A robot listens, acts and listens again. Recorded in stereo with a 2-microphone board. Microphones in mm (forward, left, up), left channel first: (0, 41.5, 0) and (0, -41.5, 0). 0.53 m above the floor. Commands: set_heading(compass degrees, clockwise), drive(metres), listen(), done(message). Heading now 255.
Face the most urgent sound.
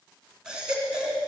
set_heading(285)
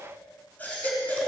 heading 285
set_heading(265)
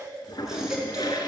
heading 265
done("Facing the baby crying, 2 to 4 m away.")